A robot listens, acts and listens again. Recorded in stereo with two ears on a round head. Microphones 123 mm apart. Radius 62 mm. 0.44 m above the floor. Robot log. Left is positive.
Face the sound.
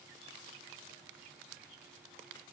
cmd idle
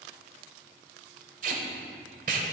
note: The tape being pulled: about 60° right or 120° right.
cmd yaw -60
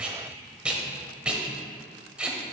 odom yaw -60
note: So it is at 10° right.
cmd yaw -10
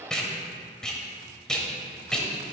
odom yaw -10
end: Facing the tape being pulled, 1 to 2 m away.